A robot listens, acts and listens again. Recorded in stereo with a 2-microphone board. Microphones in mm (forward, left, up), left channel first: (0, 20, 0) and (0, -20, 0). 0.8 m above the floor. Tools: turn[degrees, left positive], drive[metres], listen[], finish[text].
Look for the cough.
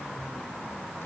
Action: listen[]
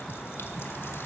Action: listen[]
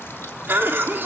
Thought: The cough: about 60° right or 120° right.
Action: turn[-60]
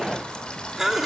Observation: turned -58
Thought: So it is at 10° right.
Action: turn[-10]
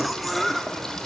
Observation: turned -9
Action: finish[Found it: a cough, straight ahead.]